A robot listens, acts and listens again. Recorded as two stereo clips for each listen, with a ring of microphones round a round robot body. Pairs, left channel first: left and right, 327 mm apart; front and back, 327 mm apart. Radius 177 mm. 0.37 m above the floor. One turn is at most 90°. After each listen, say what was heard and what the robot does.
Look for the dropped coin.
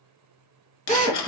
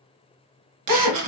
The dropped coin: 135° left. Turn 90° left.
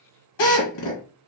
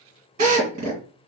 Nothing new. It was at 45° left. Turn 45° left.
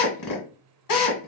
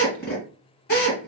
I heard a dropped coin from this way, but can't make it out now.